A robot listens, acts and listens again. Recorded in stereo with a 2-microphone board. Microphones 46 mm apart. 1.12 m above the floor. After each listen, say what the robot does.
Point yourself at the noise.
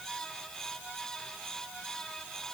Keep listening.
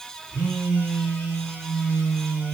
Turn 60° right.
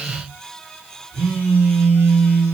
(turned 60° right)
Turn 50° right.
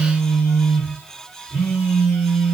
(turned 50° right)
Found it: a phone buzzing, straight ahead, 2 to 4 m away.